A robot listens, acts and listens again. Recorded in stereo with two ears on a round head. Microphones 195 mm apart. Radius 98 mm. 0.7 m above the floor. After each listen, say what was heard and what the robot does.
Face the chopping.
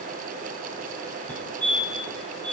Keep listening.
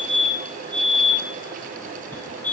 Keep listening.
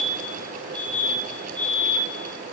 I can't make out chopping to turn to.